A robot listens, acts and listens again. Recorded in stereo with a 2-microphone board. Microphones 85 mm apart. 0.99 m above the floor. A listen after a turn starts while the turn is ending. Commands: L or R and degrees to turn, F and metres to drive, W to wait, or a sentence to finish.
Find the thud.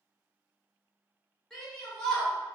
W
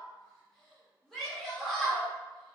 W
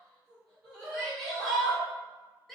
I can't make out a thud, only a shout.